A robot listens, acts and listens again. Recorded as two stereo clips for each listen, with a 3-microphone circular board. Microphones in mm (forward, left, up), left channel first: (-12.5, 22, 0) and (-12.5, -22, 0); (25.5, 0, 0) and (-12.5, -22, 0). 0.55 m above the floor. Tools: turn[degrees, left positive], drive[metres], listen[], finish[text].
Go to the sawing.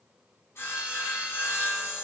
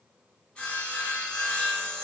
Thought: The sawing: 95° left.
Action: turn[95]
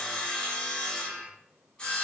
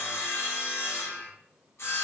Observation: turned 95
Thought: The sawing is now 25° left.
Action: turn[25]
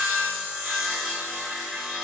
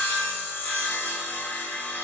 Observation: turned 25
Action: drive[1.0]
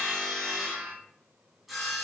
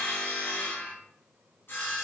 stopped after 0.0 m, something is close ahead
Action: finish[Something is in my way. I am facing the sawing but have not reached it.]